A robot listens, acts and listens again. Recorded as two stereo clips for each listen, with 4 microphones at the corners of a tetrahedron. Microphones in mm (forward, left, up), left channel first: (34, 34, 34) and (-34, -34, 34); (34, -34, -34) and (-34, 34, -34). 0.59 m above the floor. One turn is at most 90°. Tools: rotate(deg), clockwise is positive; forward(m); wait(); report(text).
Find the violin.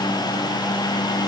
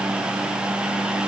wait()
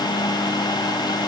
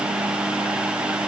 wait()
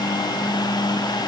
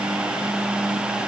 report("I can't make out a violin to turn to.")